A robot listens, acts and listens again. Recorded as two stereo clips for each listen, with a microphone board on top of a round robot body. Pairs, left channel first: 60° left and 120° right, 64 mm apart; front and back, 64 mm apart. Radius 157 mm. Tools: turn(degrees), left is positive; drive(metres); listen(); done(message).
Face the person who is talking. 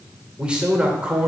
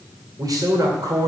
turn(degrees=170)
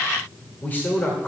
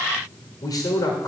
done("Found it: a man speaking, straight ahead, 2 to 4 m away.")